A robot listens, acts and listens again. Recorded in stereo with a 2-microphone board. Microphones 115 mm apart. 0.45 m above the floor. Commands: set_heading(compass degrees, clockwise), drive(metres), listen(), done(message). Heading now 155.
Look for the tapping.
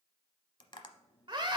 set_heading(110)
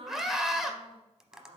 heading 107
done("Facing the tapping.")